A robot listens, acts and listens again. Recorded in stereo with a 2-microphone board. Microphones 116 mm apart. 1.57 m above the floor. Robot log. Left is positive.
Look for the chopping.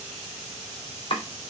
note: The chopping: about 45° left or 135° left.
cmd yaw +45
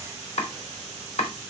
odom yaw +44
note: So it is at 85° left.
cmd yaw +85
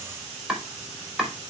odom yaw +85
end: Found it: chopping, straight ahead.